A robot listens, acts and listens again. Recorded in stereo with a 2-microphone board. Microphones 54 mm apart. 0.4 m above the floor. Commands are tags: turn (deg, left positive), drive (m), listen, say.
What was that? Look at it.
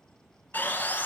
<turn deg="35"/>
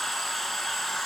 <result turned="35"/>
<say>Found it: sawing, straight ahead.</say>